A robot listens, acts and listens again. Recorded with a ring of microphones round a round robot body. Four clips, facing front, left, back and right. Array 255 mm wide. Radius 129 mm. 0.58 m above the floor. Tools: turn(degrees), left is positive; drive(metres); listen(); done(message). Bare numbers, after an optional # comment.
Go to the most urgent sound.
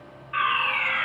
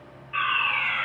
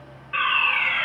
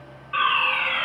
# The fire alarm: 125° right.
turn(-125)
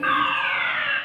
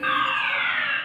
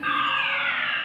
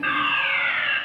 # The fire alarm is now 20° right.
turn(-20)
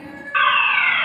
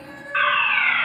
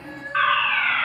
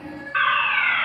drive(1.0)
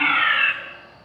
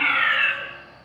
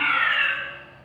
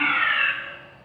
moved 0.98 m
drive(1.0)
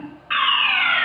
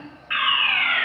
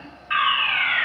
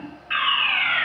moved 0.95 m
drive(1.0)
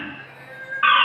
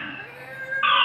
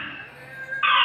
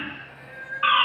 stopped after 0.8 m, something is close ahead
done("I am next to the fire alarm.")